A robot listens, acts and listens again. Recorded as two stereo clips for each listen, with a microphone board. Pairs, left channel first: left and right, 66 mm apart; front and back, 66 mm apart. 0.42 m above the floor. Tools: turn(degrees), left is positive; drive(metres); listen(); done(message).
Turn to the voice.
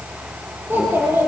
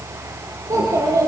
turn(degrees=-145)
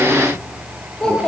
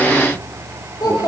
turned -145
turn(degrees=15)
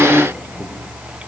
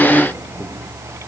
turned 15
listen()
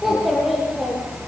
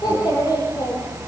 done("Found it: a child speaking, straight ahead, over 4 m away.")